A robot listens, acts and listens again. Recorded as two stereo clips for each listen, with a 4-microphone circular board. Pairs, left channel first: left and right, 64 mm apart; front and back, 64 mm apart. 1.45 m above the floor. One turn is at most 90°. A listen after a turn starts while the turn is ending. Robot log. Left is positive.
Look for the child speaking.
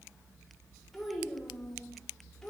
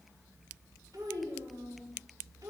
note: The child speaking: 170° left.
cmd yaw +90
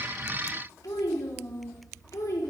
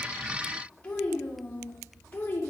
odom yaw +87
note: The child speaking is now 55° left.
cmd yaw +55
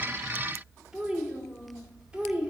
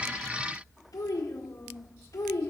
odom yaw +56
note: The child speaking is now 20° right.
cmd yaw -20
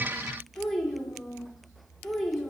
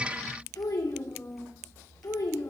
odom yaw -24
end: Found it: a child speaking, straight ahead.